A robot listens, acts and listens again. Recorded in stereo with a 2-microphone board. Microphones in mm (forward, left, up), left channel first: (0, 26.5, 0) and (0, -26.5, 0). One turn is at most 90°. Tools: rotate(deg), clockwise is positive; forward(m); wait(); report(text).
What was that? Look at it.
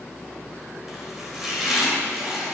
rotate(30)
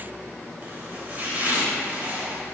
rotate(90)
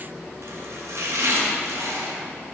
rotate(75)
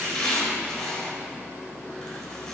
rotate(-15)
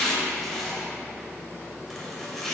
report("Found it: chopping, straight ahead, 2 to 4 m away.")